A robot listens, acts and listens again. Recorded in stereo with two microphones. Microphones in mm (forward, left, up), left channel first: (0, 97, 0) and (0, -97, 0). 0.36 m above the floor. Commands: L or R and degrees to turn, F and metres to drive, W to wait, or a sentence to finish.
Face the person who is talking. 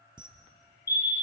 W
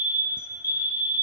W
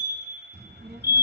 R65
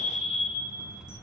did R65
Found it: a child speaking, straight ahead.